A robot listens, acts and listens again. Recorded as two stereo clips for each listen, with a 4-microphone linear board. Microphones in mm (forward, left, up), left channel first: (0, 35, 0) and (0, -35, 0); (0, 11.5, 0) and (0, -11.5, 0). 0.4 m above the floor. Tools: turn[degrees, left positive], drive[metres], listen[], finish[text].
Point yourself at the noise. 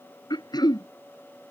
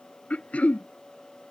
Action: turn[90]
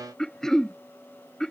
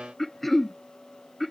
Thought: So it is at 10° left.
Action: turn[10]
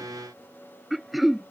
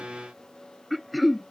Action: finish[Found it: throat clearing, straight ahead.]